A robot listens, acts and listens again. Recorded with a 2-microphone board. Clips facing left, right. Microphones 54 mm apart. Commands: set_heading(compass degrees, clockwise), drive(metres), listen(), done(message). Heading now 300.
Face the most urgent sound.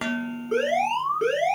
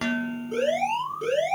set_heading(245)
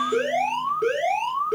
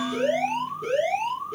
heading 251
set_heading(176)
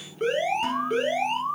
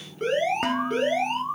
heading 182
done("Found it: an alarm, straight ahead, over 4 m away.")